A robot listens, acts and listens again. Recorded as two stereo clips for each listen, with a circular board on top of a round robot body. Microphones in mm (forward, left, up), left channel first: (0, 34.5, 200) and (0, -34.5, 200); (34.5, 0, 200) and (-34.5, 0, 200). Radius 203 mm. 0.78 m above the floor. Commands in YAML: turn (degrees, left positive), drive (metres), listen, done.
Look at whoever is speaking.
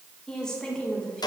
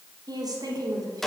turn: 170
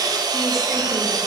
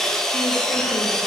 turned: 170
listen: true
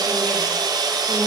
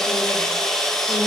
listen: true
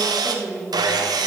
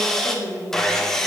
done: "Facing the woman speaking."